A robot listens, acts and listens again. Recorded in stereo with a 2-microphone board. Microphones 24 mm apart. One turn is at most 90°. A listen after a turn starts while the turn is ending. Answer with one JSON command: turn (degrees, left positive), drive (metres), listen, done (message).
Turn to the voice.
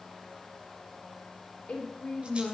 {"turn": 70}
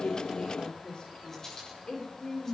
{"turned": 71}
{"turn": 40}
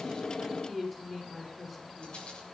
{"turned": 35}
{"done": "Facing the woman speaking, over 4 m away."}